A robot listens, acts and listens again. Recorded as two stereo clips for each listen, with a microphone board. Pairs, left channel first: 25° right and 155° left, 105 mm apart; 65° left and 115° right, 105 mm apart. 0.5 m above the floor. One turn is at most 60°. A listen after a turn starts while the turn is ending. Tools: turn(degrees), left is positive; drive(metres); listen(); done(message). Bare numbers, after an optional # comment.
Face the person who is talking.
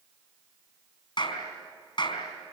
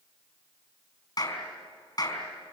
listen()
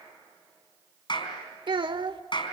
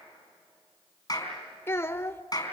# The child speaking: 130° left.
turn(60)
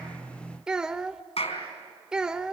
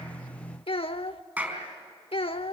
# The child speaking is now 75° left.
turn(60)
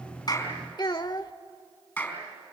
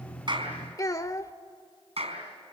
# The child speaking is now 15° left.
turn(15)
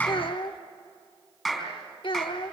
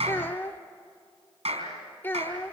done("Facing the child speaking, under 1 m away.")